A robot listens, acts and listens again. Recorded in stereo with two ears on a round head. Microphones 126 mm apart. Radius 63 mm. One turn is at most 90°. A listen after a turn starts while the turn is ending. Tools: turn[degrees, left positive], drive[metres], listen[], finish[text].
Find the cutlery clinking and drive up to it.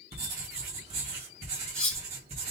Action: turn[30]
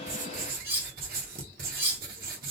Thought: So it is at 20° right.
Action: turn[-20]
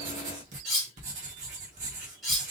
Action: drive[1.0]
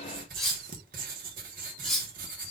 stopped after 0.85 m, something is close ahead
Action: finish[I am next to the cutlery clinking.]